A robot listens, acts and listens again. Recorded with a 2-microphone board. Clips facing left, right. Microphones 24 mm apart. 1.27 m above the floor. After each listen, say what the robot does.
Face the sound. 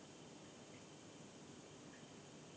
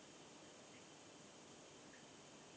Keep listening.
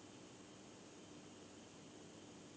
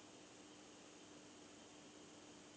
Keep listening.
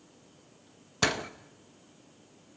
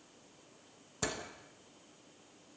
Turn 55° left.
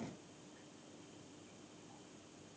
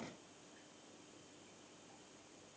Keep listening.
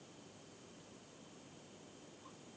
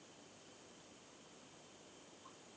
I heard a door slam, but can't make it out now. It was about straight ahead or 70° left.